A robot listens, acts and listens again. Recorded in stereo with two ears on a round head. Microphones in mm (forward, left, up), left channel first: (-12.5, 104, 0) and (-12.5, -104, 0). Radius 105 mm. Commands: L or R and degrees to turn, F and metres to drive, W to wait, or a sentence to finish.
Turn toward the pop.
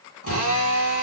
W
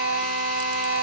W
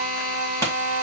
L30
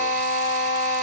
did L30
W
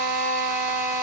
I heard a pop, but can't make it out now. It was about 20° right or 140° left.